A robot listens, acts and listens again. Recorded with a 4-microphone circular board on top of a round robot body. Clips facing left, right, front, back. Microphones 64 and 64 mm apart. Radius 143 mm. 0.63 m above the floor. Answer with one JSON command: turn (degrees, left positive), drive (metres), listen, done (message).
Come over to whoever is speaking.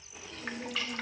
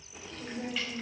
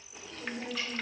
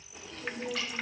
{"turn": -50}
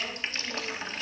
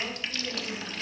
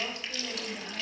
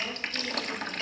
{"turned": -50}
{"listen": true}
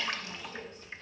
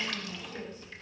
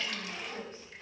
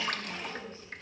{"listen": true}
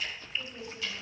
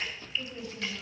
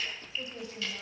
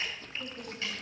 {"drive": 1.0}
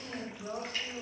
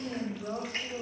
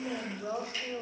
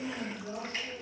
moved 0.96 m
{"drive": 1.0}
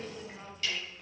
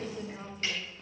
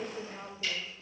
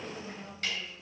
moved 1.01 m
{"turn": -15}
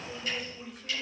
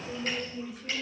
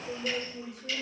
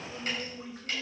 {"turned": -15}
{"drive": 1.0}
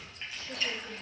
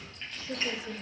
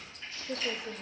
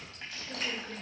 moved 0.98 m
{"turn": -10}
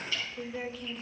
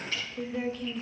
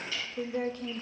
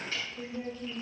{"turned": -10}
{"drive": 1.0}
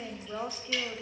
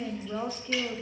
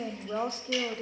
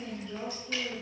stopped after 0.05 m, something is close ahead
{"done": "I am next to the woman speaking."}